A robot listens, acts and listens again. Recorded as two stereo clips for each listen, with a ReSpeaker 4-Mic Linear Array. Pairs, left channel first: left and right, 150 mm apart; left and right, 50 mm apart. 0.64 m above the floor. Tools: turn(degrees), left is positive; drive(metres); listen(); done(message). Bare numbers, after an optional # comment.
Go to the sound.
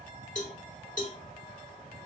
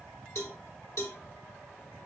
# The cowbell: about 65° left or 115° left.
turn(65)
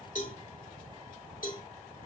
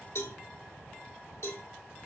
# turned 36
# So it is at 70° left.
turn(70)
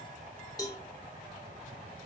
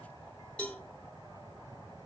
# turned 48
# The cowbell is now 25° left.
turn(25)
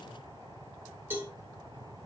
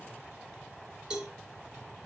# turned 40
# The cowbell is now 15° right.
turn(-15)
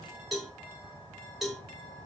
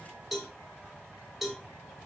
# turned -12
drive(1.0)
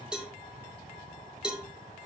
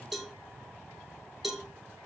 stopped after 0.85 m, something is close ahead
done("I am next to the cowbell.")